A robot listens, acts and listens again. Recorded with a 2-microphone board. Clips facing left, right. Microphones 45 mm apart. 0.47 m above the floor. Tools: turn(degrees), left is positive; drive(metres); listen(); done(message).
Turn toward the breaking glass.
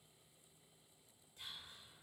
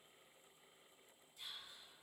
listen()
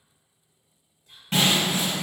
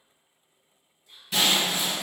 turn(degrees=45)
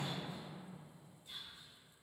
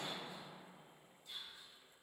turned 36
listen()
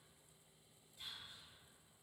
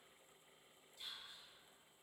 done("I heard breaking glass, but can't make it out now. It was about 10° left or 95° left.")